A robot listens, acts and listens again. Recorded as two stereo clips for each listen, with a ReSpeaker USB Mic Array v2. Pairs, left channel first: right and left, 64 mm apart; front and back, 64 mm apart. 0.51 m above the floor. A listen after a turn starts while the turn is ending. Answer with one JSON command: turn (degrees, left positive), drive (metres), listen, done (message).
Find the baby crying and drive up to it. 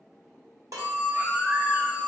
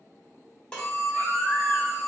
{"turn": 45}
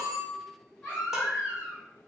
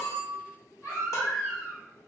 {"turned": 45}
{"turn": -25}
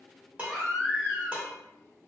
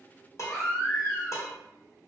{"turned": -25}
{"turn": -10}
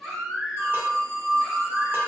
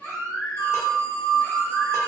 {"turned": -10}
{"drive": 1.0}
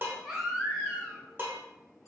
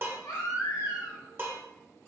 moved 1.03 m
{"drive": 1.0}
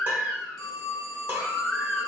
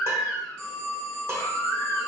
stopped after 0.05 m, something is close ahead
{"done": "I am next to the baby crying."}